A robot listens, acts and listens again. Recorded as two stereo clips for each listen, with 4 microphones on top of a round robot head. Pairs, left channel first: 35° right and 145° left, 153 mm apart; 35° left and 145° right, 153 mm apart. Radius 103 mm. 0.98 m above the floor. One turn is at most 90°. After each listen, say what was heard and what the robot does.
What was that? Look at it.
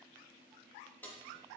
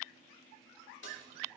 The keys jangling: 45° left. Turn 45° left.
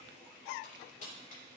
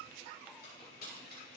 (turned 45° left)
The keys jangling is now 10° left. Turn 10° left.
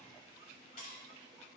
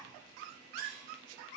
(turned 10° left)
Keep listening.
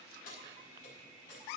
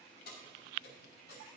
Facing the keys jangling.